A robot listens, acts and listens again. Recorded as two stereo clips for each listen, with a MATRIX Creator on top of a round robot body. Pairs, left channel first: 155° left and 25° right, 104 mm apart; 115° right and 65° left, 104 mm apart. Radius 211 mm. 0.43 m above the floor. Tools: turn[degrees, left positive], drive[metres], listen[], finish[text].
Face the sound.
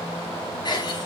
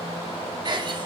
Thought: The giggle: 115° left.
Action: turn[115]
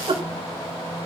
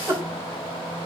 Thought: The giggle is now 10° left.
Action: turn[10]
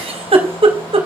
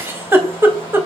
Action: finish[Found it: a giggle, straight ahead.]